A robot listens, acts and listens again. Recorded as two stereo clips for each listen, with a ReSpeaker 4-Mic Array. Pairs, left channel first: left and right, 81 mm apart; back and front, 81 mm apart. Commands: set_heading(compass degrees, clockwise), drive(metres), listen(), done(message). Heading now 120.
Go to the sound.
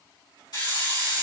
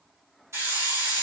set_heading(65)
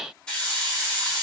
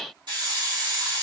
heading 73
set_heading(63)
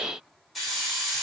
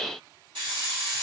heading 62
drive(1.0)
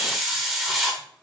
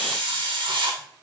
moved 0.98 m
drive(1.0)
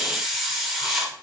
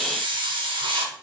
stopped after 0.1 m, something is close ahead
done("I am next to the hiss.")